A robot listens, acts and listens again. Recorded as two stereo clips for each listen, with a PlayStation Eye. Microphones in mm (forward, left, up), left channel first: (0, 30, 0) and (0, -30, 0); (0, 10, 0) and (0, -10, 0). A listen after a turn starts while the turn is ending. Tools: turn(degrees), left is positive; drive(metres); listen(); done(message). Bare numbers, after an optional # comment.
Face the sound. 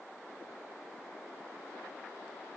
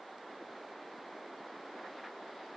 listen()
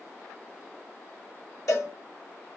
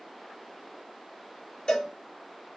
# The cowbell: about 70° left or 110° left.
turn(70)
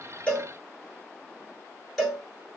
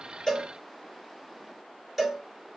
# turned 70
done("Found it: a cowbell, straight ahead.")